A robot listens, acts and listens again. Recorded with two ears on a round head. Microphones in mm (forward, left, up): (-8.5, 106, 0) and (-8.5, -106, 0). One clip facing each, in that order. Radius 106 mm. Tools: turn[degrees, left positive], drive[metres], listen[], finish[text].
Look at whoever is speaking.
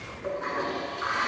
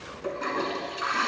Action: listen[]
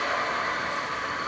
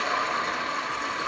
Action: listen[]
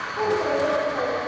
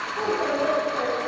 Action: turn[-30]
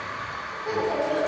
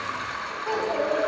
Thought: So it is at 15° left.
Action: turn[15]
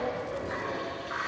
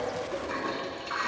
Action: listen[]
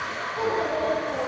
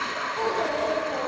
Action: finish[Facing the child speaking, 2 to 4 m away.]